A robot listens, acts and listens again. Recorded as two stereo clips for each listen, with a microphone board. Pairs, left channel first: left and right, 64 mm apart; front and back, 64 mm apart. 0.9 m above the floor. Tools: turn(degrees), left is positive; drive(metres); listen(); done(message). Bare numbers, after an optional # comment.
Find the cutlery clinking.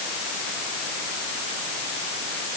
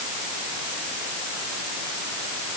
listen()
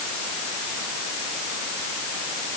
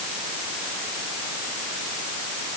listen()
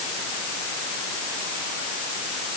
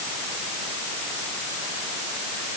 done("I can't make out cutlery clinking to turn to.")